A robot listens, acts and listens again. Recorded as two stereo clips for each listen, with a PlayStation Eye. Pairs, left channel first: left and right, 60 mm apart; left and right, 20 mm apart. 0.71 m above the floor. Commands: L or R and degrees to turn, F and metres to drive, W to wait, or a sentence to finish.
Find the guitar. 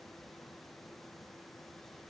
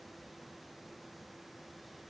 W
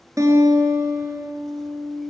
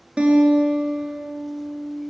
R60
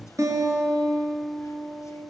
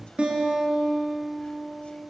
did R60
R65
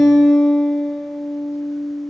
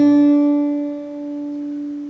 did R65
Found it: a guitar, straight ahead.